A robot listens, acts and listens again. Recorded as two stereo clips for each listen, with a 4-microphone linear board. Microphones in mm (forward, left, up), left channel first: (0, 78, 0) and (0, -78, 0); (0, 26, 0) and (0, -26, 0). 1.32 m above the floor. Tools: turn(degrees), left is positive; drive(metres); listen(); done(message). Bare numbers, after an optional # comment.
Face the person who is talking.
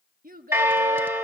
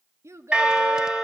# The child speaking: about 65° right or 115° right.
turn(-65)
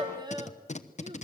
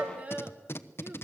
# So it is at 30° right.
turn(-30)
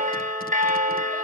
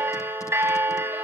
listen()
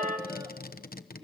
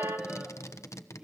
listen()
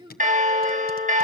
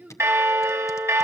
# The child speaking is now 30° right.
turn(-30)
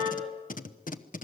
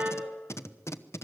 listen()
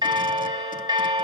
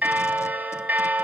listen()
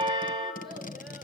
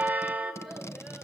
done("I heard a child speaking from this way, but can't make it out now.")